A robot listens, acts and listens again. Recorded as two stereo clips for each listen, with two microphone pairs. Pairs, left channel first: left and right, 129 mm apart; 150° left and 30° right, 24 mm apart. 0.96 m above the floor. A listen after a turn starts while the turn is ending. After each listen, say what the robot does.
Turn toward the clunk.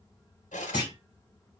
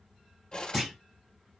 Turn 35° left.
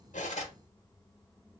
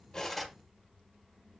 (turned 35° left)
Facing where the clunk came from. I can't hear it now.